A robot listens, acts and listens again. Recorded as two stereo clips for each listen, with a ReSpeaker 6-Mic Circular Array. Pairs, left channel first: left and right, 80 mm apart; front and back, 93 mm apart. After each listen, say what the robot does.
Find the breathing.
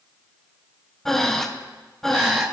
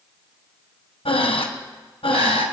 Found it: breathing, straight ahead, 1 to 2 m away.